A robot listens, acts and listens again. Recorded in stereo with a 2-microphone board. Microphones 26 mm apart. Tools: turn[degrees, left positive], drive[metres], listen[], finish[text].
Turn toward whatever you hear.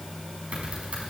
Thought: The typing on a keyboard: about 50° right or 130° right.
Action: turn[-50]
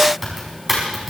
Action: finish[Found it: typing on a keyboard, straight ahead.]